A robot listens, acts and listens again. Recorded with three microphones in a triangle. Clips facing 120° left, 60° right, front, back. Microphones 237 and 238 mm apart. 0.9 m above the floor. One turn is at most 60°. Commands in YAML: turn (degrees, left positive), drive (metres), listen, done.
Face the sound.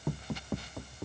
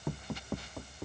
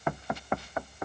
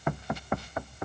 listen: true
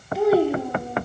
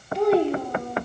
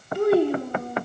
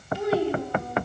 turn: 40
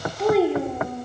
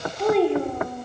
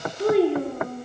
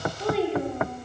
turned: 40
turn: 40
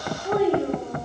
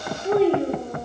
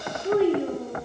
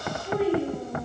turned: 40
done: "Found it: a child speaking, straight ahead."